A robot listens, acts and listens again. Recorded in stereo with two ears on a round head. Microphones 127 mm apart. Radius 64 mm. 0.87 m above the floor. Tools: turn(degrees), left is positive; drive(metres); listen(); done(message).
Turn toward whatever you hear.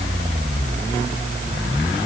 listen()
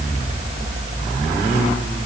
listen()
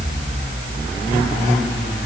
done("I can't make out anything to turn to.")